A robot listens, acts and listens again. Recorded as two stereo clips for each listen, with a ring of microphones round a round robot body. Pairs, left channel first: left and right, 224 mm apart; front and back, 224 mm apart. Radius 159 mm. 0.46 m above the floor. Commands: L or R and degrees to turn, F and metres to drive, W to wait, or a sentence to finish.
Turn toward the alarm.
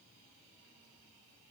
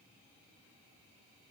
W
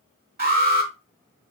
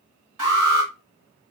R150
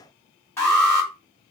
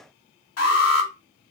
L10
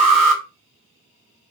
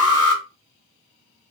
Facing the alarm, 2 to 4 m away.